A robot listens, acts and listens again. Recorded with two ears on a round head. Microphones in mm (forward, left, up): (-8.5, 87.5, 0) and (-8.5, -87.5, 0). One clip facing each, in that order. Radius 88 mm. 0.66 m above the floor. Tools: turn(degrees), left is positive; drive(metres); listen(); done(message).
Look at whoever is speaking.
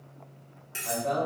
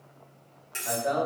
turn(degrees=-25)
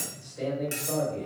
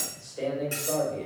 turn(degrees=-130)
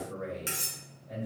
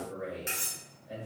turn(degrees=-15)
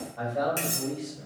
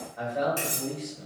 done("Found it: a man speaking, straight ahead, 1 to 2 m away.")